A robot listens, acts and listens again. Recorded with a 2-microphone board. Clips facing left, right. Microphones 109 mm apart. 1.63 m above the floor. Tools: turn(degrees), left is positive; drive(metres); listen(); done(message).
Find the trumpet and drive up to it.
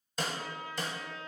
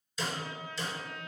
turn(degrees=-55)
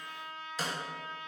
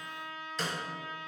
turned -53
drive(metres=1.0)
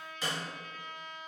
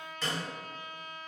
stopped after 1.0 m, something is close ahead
turn(degrees=-15)
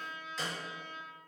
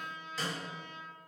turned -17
done("I am next to the trumpet.")